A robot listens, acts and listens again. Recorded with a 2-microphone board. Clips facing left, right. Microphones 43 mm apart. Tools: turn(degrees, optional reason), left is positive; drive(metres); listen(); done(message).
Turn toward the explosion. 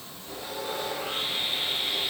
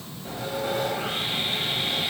listen()
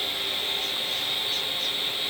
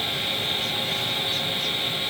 listen()
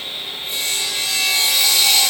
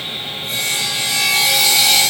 done("I can't make out an explosion, only sawing.")